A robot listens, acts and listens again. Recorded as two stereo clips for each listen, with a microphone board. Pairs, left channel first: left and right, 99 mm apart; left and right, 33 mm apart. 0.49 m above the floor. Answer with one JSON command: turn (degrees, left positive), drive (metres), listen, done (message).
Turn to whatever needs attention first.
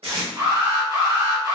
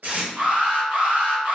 {"turn": -45}
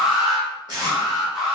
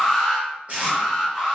{"done": "Facing the alarm, 1 to 2 m away."}